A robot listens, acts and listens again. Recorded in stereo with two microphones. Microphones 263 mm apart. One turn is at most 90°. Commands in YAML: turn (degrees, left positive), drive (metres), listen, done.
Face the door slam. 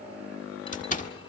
turn: 30
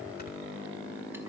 listen: true
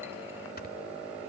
done: "I heard a door slam, but can't make it out now. It was about straight ahead or 120° left."